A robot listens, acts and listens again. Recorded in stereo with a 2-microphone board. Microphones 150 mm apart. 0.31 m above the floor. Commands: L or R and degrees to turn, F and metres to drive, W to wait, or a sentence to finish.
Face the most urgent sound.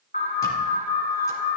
L65
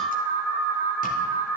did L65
L20
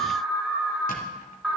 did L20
Facing the alarm.